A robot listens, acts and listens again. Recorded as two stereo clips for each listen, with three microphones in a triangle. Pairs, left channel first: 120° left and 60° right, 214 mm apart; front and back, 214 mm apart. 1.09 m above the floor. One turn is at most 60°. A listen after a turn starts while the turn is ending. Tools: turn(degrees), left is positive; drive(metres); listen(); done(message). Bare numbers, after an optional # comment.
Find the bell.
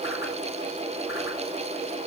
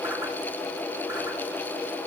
listen()
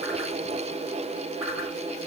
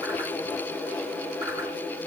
listen()
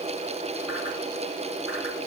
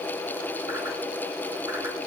done("I can't make out a bell to turn to.")